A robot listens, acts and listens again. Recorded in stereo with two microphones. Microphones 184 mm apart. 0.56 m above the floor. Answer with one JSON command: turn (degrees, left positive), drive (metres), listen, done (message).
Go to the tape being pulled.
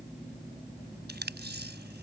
{"turn": -65}
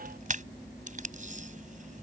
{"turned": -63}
{"turn": -45}
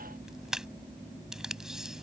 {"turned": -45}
{"drive": 1.0}
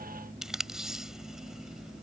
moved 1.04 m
{"drive": 1.0}
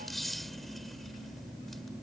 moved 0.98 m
{"listen": true}
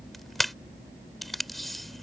{"drive": 1.0}
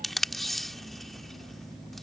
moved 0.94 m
{"drive": 1.0}
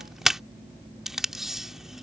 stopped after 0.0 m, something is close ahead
{"done": "Arrived at the tape being pulled, straight ahead."}